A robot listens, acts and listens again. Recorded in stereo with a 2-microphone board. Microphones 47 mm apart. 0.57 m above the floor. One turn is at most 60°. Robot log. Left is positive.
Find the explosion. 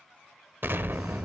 note: The explosion: about 50° right or 130° right.
cmd yaw -50
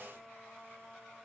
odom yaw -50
cmd idle
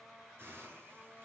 end: I heard an explosion, but can't make it out now. It was about straight ahead or 80° right.